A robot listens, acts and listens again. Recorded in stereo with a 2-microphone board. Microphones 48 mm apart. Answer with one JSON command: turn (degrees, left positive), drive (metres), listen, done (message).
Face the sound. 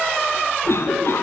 {"turn": 65}
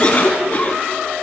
{"turn": 40}
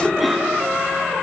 {"done": "Facing the cough."}